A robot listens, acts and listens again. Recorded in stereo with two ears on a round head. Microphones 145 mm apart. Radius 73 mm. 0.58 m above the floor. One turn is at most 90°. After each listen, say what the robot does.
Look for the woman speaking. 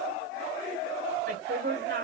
Turn 70° right.
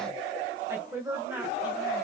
Turn 15° right.
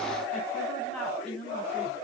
Found it: a woman speaking, straight ahead, 2 to 4 m away.